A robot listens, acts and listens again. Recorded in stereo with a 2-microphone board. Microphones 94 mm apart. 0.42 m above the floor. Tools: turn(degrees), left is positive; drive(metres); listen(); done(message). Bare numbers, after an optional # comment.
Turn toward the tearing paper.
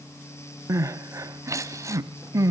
listen()
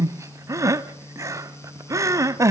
listen()
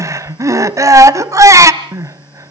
done("I can't make out tearing paper, only crying.")